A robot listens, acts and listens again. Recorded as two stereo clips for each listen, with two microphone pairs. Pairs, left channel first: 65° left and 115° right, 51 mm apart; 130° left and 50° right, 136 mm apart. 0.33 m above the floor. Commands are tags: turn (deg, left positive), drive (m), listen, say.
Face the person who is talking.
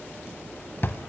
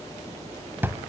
<listen/>
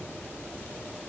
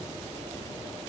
<listen/>
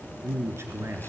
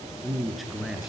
<turn deg="-140"/>
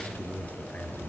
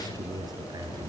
<turn deg="10"/>
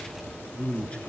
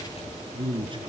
<say>Found it: a man speaking, straight ahead.</say>